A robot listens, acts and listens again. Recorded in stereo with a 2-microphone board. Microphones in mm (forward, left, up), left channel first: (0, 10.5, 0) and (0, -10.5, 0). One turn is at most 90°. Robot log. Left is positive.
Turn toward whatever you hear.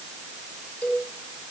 cmd yaw +90
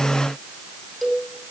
end: Found it: a cowbell, straight ahead, over 4 m away.